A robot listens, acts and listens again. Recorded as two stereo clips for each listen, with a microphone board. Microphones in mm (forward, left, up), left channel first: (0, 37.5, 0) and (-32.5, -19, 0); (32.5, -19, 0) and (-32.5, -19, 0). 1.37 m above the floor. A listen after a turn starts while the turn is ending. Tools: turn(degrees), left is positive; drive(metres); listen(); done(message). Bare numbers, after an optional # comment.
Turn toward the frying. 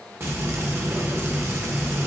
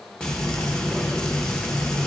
# The frying: 75° right.
turn(-75)
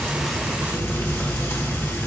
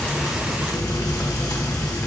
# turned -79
done("Facing the frying.")